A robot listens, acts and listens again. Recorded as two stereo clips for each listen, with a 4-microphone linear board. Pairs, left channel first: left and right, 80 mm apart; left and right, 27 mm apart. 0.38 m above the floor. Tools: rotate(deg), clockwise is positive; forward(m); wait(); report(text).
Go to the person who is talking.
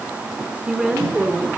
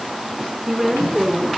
rotate(30)
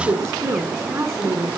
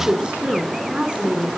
rotate(140)
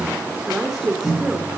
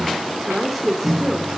forward(1.0)
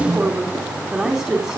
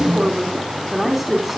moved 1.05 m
forward(1.0)
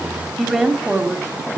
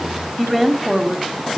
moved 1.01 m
forward(1.0)
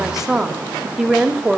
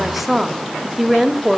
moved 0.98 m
forward(1.0)
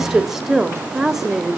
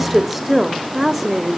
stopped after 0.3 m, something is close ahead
report("Arrived at the woman speaking, straight ahead.")